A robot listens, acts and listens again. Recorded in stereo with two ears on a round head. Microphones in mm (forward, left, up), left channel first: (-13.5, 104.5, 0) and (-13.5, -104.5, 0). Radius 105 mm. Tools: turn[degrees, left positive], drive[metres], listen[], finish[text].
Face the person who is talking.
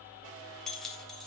Action: listen[]
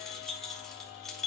Action: listen[]
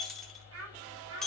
Thought: The child speaking: about 65° right or 115° right.
Action: turn[-65]
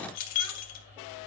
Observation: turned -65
Action: listen[]
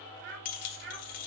Thought: So it is at 50° right.
Action: turn[-50]
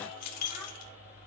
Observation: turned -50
Action: listen[]
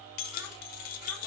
Action: listen[]
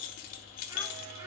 Action: finish[I heard a child speaking from this way, but can't make it out now.]